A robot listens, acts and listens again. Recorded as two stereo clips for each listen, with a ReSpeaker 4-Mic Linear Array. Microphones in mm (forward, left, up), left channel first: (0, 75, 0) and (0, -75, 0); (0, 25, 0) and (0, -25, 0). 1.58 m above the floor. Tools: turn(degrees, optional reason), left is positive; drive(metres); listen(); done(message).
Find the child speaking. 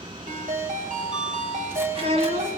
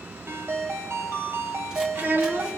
turn(degrees=-45, reason="The child speaking: about 45° right or 135° right.")
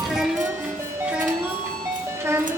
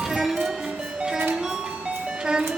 turn(degrees=-20, reason="So it is at 20° right.")
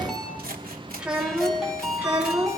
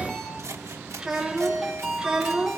turn(degrees=-10, reason="The child speaking is now 10° right.")
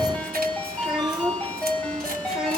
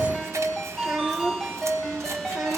done("Found it: a child speaking, straight ahead, 2 to 4 m away.")